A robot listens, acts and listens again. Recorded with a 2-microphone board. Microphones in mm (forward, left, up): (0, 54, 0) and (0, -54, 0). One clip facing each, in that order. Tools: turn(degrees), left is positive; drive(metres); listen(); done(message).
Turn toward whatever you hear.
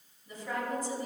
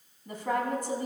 turn(degrees=-60)
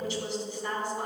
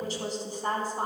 turn(degrees=-45)
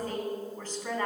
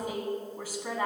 turn(degrees=-10)
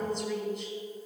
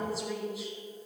done("Found it: a woman speaking, straight ahead, 2 to 4 m away.")